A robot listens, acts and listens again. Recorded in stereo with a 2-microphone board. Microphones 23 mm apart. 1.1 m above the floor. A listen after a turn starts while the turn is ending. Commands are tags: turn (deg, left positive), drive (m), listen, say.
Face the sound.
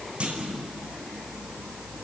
<turn deg="-50"/>
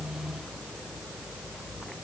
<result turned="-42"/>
<listen/>
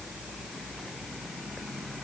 <say>I heard a clunk, but can't make it out now. It was about 5° right or 90° right.</say>